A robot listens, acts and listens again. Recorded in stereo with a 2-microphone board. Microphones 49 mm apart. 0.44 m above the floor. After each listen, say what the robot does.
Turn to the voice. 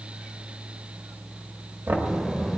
Turn 30° right.
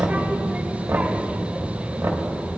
Turn 145° right.
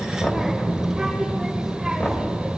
Turn 10° right.
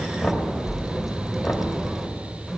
Found it: a child speaking, straight ahead.